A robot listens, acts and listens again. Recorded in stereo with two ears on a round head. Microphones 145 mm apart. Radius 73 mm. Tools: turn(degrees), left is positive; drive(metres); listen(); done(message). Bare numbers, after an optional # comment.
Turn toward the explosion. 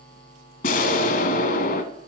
# The explosion: about 60° left or 120° left.
turn(60)
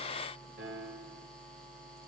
listen()
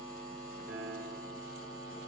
done("I heard an explosion, but can't make it out now. It was about straight ahead or 60° left.")